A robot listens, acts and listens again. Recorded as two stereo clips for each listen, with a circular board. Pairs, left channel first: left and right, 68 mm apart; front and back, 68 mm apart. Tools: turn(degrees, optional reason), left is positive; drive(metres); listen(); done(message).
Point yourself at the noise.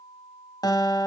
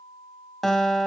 turn(degrees=85, reason="The guitar: 85° left.")
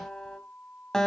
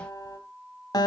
done("Found it: a guitar, straight ahead.")